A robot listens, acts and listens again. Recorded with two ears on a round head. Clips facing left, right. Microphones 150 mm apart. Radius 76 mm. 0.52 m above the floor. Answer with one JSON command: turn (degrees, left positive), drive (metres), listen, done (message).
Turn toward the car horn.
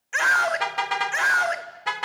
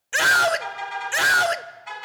{"turn": 90}
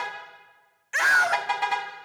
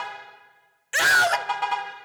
{"turn": 10}
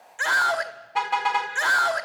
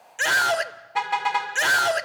{"done": "Facing the car horn, 2 to 4 m away."}